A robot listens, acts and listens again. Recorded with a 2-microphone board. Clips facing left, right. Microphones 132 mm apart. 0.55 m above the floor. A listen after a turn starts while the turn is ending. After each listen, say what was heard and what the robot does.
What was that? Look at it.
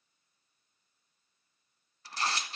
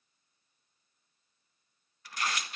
The tearing paper: about 30° left or 150° left. Turn 30° left.
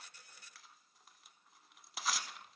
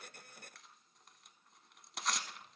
Found it: tearing paper, straight ahead.